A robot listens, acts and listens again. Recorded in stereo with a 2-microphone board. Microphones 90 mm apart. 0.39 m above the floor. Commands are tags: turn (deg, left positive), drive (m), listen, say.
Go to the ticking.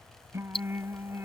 <turn deg="90"/>
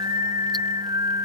<listen/>
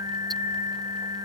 <listen/>
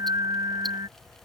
<say>Facing where the ticking came from. I can't hear it now. I did not reach it.</say>